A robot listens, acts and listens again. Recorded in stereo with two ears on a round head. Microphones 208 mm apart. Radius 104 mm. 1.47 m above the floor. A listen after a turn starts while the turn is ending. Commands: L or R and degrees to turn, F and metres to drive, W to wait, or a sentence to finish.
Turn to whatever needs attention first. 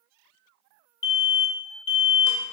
L50
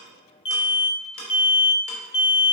L65
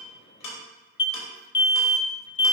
L25
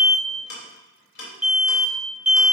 Found it: an alarm, straight ahead, under 1 m away.